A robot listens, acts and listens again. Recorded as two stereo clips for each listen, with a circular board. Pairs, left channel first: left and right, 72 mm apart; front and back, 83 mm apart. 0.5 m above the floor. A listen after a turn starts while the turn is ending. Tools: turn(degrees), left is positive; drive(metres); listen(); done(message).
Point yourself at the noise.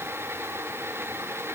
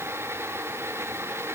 listen()
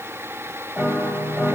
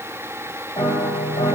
done("Found it: a piano, straight ahead, 1 to 2 m away.")